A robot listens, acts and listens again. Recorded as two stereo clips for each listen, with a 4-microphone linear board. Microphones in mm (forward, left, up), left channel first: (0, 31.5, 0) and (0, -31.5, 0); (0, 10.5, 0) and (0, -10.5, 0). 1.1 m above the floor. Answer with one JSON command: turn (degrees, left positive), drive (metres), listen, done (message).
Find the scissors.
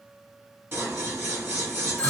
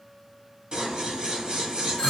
{"turn": -40}
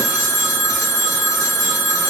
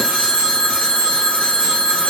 {"listen": true}
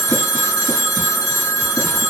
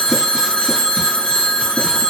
{"listen": true}
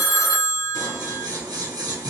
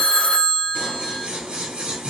{"turn": -95}
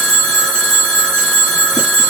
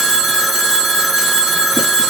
{"listen": true}
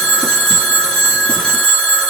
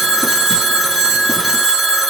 {"listen": true}
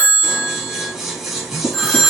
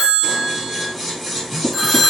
{"done": "Found it: scissors, straight ahead."}